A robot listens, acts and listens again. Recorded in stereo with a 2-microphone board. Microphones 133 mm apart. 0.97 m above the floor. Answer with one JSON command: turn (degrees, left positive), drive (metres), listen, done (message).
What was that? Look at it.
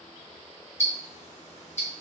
{"turn": 60}
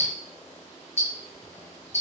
{"turn": 60}
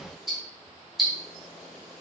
{"done": "Found it: ticking, straight ahead, under 1 m away."}